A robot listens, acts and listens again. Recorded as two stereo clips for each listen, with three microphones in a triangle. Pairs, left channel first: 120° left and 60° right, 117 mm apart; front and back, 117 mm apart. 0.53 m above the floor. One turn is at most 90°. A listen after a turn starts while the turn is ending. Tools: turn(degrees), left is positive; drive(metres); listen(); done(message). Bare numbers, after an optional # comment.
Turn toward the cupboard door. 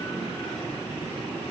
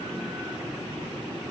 listen()
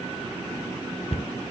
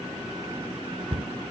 # The cupboard door: 150° left.
turn(90)
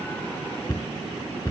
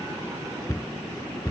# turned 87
# The cupboard door is now 60° left.
turn(60)
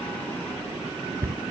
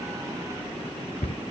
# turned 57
done("Found it: a cupboard door, straight ahead.")